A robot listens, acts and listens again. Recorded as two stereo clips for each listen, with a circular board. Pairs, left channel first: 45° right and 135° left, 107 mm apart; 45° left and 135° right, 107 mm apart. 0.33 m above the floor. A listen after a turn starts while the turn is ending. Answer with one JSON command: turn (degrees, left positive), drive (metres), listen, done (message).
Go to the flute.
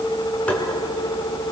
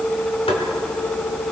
{"listen": true}
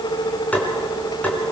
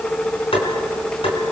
{"listen": true}
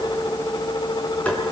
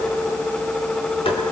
{"done": "I can't make out a flute, only tapping."}